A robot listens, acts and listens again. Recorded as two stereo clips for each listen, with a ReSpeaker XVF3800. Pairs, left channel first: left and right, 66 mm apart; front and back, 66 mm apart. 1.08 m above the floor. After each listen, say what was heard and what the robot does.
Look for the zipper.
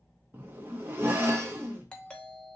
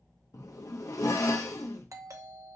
The zipper: 30° right. Turn 30° right.
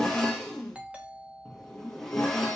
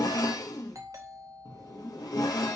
Facing the zipper.